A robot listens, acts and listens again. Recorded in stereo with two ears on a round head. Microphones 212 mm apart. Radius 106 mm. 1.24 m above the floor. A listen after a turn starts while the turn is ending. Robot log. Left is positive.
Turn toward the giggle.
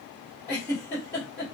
cmd yaw +30
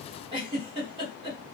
note: So it is at 20° right.
cmd yaw -20
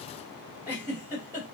note: The giggle is now 10° right.
cmd yaw -10
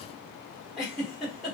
end: Facing the giggle, 1 to 2 m away.